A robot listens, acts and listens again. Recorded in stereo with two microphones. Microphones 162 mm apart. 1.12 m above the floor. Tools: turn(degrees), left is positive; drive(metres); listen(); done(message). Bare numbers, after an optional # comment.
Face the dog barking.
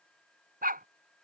# The dog barking: about 65° right or 115° right.
turn(-65)
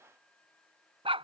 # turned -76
# So it is at 35° right.
turn(-35)
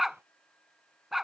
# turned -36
done("Found it: a dog barking, straight ahead.")